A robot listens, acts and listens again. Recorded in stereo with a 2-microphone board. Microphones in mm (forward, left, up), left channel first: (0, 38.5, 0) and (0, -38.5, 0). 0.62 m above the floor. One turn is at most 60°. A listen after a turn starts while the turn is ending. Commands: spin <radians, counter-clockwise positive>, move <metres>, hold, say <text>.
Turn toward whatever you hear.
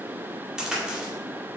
spin -0.52
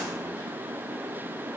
hold
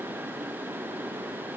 say I heard a crack, but can't make it out now. It was about 20° left or 140° right.